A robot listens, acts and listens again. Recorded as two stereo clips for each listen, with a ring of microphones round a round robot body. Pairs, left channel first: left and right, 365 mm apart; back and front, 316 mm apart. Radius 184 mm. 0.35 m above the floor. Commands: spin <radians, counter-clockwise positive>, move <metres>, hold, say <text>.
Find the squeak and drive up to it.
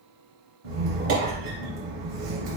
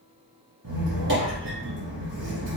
spin -1.05
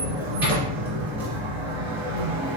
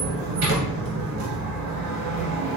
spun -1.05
move 1.0
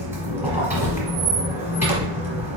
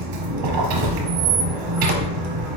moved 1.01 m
move 1.0
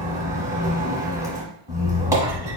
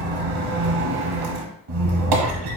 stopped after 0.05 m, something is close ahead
spin -0.17
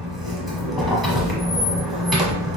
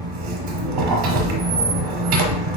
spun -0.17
say Arrived at the squeak, straight ahead.